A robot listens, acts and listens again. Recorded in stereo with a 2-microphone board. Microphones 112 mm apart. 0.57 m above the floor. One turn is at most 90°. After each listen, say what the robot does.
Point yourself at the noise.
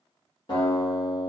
Turn 45° left.
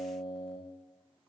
Found it: a guitar, straight ahead.